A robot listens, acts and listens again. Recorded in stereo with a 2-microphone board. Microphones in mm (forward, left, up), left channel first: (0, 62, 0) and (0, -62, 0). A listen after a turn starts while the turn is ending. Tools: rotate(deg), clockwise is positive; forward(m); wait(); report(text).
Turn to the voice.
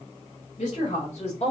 rotate(-60)
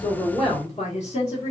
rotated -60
rotate(-70)
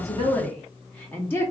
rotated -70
rotate(-20)
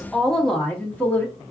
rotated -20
rotate(-15)
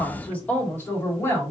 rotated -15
rotate(-20)
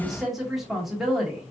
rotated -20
report("Found it: a woman speaking, straight ahead, 1 to 2 m away.")